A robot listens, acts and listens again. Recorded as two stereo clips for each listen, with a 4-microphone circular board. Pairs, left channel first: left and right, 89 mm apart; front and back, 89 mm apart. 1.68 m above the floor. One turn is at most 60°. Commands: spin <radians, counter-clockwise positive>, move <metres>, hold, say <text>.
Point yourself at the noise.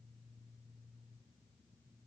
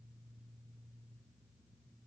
hold
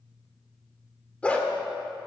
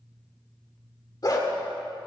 spin 0.35
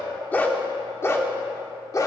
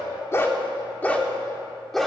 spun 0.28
spin 1.05
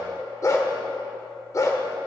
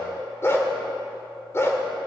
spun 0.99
spin 0.87
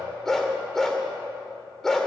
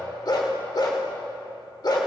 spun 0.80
say Found it: a dog barking, straight ahead, 1 to 2 m away.